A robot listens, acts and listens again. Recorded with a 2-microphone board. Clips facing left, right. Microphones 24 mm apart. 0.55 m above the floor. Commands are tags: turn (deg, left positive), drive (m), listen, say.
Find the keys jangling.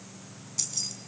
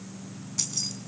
<turn deg="-30"/>
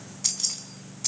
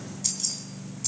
<turn deg="25"/>
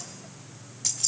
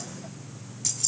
<turn deg="10"/>
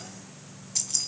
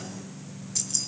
<turn deg="10"/>
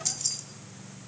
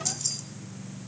<say>Found it: keys jangling, straight ahead.</say>